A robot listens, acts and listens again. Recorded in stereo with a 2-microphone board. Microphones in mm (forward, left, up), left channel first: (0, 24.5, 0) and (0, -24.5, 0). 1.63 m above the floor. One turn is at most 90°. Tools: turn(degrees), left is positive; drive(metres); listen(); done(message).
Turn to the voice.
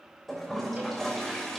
listen()
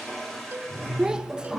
turn(degrees=-15)
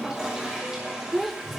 done("Facing the child speaking, under 1 m away.")